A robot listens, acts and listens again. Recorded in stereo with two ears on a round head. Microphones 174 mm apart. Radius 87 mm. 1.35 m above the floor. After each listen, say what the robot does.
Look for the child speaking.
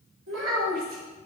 Turn 90° right.
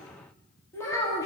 Turn 15° left.
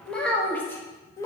Turn 15° left.
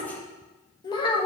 Turn 30° left.
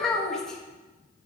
Facing the child speaking, 1 to 2 m away.